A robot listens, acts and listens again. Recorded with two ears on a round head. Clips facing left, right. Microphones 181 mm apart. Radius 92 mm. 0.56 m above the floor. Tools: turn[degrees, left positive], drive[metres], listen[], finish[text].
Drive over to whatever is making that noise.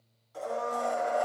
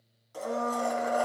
Thought: The blender: about 55° right or 125° right.
Action: turn[-55]
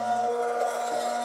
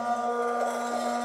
Action: drive[1.0]
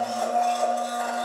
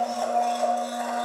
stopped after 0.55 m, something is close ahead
Action: finish[Blocked. The blender is further on, straight ahead.]